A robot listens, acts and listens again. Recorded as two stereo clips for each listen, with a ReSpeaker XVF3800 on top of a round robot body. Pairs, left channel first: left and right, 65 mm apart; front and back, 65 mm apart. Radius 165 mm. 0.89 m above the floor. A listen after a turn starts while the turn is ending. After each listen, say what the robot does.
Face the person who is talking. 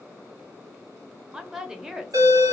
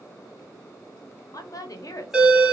Turn 10° right.
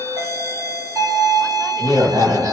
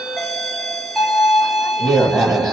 Keep listening.
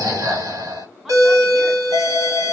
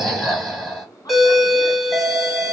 Keep listening.
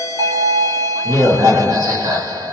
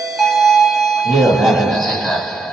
I heard a woman speaking from this way, but can't make it out now.